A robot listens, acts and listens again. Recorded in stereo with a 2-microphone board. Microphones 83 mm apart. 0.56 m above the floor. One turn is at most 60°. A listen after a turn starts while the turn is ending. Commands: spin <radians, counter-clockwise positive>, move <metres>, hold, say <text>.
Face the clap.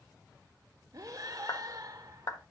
spin 0.87
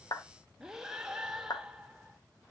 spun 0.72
spin 1.05
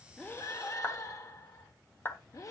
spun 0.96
spin 0.52
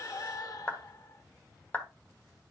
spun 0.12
spin 0.35
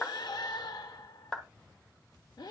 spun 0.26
say Found it: a clap, straight ahead.